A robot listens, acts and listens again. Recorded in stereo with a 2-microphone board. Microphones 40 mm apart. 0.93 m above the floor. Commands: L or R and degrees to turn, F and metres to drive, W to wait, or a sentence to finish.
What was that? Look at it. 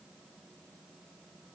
W
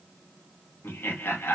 L70
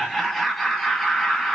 Found it: laughter, straight ahead.